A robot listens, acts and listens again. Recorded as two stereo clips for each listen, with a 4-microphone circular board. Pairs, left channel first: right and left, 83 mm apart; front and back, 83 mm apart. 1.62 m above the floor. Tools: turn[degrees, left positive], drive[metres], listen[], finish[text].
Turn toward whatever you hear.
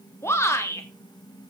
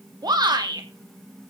Thought: The shout: 145° right.
Action: turn[-145]
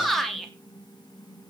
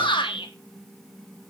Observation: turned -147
Action: finish[Facing the shout.]